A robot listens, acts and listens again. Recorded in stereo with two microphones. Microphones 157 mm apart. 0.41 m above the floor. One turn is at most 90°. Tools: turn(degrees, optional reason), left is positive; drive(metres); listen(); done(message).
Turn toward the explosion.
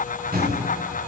turn(degrees=-70, reason="The explosion: about 70° right or 110° right.")
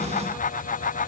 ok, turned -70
listen()
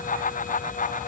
done("I heard an explosion, but can't make it out now. It was about straight ahead or 40° right.")